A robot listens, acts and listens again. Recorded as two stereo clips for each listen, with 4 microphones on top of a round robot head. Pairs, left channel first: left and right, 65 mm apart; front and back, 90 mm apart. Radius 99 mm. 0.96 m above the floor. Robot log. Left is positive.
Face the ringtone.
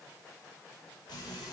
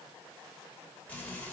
cmd idle
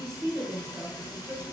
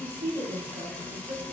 cmd idle
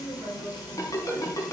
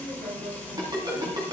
note: The ringtone: 130° left.
cmd yaw +130
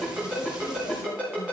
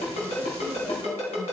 note: The ringtone is now 15° right.
cmd yaw -15
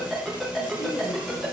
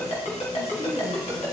end: Facing the ringtone.